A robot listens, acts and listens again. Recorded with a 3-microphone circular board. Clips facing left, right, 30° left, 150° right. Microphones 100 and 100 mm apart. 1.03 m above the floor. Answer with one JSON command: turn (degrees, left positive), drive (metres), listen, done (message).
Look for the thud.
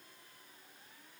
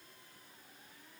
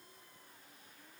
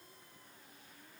{"listen": true}
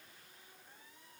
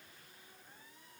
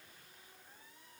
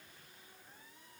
{"listen": true}
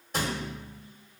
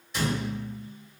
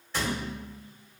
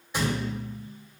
{"turn": 135}
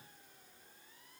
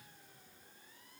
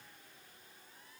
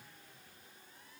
{"done": "Facing where the thud came from. I can't hear it now."}